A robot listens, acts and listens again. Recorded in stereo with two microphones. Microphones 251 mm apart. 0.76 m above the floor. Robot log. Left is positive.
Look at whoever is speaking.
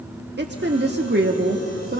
note: The woman speaking: about 40° right or 140° right.
cmd yaw -40
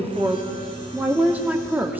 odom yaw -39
end: Facing the woman speaking.